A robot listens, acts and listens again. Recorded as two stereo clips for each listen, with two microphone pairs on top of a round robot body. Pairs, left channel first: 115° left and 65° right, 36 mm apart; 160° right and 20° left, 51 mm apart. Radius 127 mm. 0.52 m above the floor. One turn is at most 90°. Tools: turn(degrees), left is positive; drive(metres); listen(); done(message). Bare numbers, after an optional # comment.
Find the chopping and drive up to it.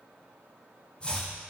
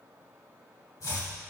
# The chopping: straight behind.
turn(90)
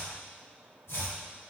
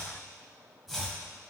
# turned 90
# The chopping is now 105° left.
turn(90)
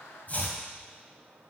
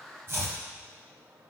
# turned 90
# The chopping is now 65° left.
turn(65)
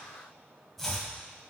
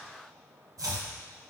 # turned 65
# The chopping is now 25° left.
turn(25)
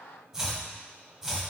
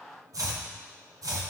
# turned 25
# The chopping is now 10° left.
turn(10)
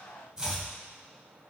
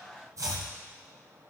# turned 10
drive(1.0)
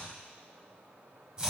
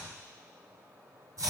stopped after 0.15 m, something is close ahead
done("Blocked. The chopping is further on, straight ahead.")